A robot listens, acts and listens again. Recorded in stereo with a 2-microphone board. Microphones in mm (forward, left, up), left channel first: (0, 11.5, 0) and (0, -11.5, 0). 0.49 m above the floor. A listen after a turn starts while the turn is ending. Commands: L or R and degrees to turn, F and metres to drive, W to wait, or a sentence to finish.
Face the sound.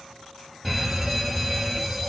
L30
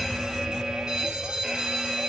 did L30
R30
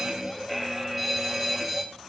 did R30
Facing the fire alarm.